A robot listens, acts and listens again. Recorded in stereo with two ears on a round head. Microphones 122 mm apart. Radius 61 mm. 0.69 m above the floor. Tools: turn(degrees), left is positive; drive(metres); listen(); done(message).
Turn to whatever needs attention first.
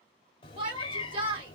turn(degrees=-35)
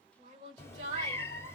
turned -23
turn(degrees=-120)
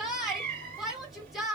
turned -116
done("Facing the shout.")